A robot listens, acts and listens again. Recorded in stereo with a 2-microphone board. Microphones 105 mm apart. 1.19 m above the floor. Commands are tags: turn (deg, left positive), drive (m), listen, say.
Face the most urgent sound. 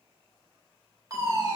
<turn deg="-35"/>
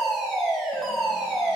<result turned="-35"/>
<say>Found it: a fire alarm, straight ahead.</say>